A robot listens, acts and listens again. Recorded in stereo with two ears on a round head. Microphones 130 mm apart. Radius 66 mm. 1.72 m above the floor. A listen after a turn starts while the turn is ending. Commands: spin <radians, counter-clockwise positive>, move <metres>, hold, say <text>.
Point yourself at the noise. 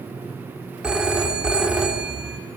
spin -0.52
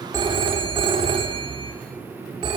spin -2.53
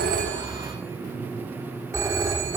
spin -0.35
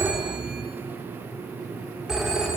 say Found it: a phone ringing, straight ahead.